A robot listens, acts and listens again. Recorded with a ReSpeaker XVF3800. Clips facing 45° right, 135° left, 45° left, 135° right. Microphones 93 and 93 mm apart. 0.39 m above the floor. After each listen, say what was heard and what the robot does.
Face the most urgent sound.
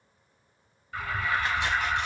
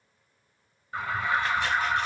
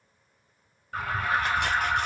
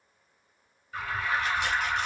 The alarm: 75° left. Turn 75° left.
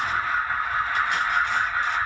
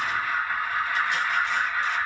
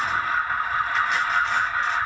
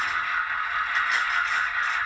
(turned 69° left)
Facing the alarm, 1 to 2 m away.